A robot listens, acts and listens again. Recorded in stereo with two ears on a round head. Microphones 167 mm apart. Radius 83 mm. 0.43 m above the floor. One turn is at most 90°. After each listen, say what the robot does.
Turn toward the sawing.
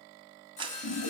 Turn 40° left.
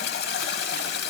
Keep listening.
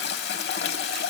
Keep listening.
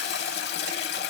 I heard sawing, but can't make it out now. It was about straight ahead or 100° left.